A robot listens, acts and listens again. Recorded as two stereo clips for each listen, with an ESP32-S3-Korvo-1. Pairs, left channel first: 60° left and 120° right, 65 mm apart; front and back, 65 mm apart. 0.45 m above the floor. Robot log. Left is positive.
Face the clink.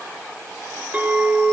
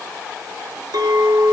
note: The clink: straight behind.
cmd yaw +180
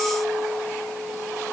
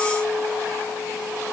note: The clink is now 20° right.
cmd yaw -20
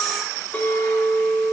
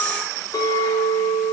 end: Found it: a clink, straight ahead, over 4 m away.